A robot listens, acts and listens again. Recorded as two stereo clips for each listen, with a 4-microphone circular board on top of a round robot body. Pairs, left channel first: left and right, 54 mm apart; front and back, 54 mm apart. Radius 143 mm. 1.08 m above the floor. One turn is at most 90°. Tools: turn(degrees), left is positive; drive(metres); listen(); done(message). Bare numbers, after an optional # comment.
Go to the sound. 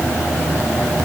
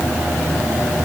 listen()
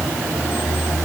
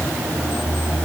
listen()
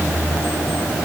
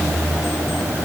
done("I can't make out anything.")